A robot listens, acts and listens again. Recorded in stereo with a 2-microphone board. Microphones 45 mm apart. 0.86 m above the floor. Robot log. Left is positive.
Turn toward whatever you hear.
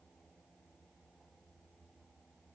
cmd idle
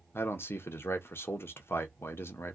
note: The man speaking: about 60° left or 120° left.
cmd yaw +60
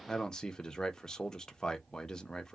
note: So it is at 15° left.
cmd yaw +15
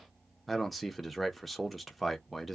end: Facing the man speaking, under 1 m away.